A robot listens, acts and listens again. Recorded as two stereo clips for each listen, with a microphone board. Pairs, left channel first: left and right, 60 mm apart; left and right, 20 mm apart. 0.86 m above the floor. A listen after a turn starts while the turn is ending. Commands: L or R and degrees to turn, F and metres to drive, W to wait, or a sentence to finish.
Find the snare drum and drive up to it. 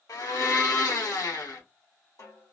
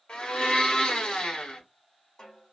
L60
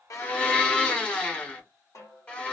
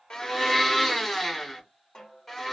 L55
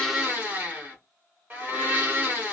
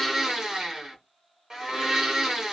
W
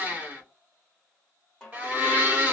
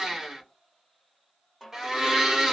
L10
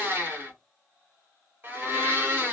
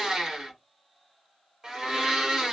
W
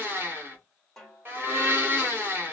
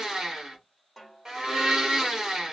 F1.0
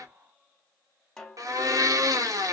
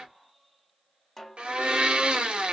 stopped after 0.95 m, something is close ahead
L10
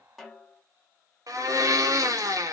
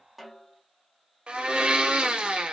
I am next to the snare drum.